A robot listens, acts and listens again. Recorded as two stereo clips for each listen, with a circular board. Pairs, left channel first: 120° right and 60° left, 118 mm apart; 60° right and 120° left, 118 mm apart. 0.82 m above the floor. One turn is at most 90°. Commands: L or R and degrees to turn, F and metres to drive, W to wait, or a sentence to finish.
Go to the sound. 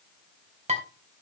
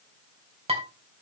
L85
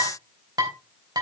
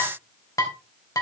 F1.0
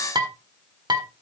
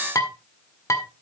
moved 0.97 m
F1.0
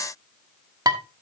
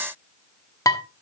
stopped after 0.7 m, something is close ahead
Arrived at the dishes clattering, straight ahead.